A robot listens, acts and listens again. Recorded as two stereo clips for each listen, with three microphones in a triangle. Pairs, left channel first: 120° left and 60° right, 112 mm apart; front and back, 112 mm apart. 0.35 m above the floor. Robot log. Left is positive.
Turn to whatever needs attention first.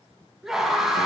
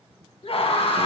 note: The scream: 25° left.
cmd yaw +25
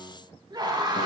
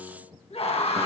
note: The scream is now 15° right.
cmd yaw -15
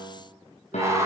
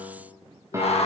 end: Found it: a scream, straight ahead, 2 to 4 m away.